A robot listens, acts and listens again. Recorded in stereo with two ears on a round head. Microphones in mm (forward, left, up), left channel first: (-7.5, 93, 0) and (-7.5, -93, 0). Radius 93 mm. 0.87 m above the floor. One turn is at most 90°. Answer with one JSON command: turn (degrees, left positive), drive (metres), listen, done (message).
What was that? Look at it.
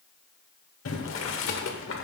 {"turn": 70}
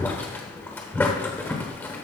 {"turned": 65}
{"turn": 10}
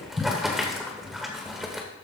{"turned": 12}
{"done": "Facing the boiling."}